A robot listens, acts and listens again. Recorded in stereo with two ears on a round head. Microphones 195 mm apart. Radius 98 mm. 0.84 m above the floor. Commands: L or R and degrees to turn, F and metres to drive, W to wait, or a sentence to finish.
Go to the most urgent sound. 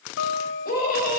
L45
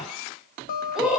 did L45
F1.0
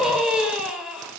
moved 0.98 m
F1.0
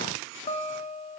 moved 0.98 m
W
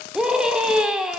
F1.0
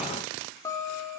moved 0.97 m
W
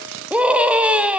F1.0
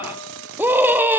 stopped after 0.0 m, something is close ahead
R10
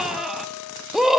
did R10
Arrived at the scream, straight ahead.